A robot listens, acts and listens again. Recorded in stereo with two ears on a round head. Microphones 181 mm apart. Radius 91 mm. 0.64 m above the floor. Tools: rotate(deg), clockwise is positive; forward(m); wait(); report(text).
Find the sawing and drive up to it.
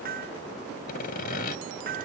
rotate(-45)
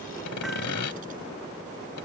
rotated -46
rotate(-85)
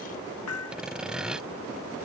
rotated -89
forward(1.0)
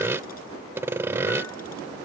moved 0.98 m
rotate(10)
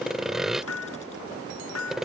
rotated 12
forward(1.0)
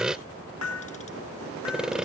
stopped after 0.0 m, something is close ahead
report("Arrived at the sawing, straight ahead.")